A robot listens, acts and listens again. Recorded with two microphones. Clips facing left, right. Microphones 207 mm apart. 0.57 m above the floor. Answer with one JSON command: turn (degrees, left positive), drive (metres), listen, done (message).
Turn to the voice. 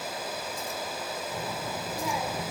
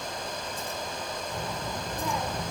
{"turn": 30}
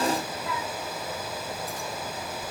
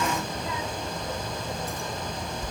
{"turn": -25}
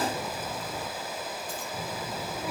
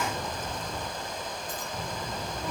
{"turn": 10}
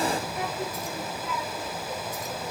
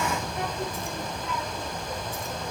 {"done": "Facing the child speaking, 1 to 2 m away."}